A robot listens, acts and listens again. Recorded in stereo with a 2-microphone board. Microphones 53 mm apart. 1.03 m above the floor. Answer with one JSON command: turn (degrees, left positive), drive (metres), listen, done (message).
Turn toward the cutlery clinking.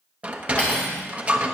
{"turn": 20}
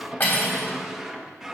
{"turn": 140}
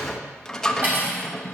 {"turn": -35}
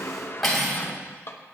{"done": "Found it: cutlery clinking, straight ahead, 2 to 4 m away."}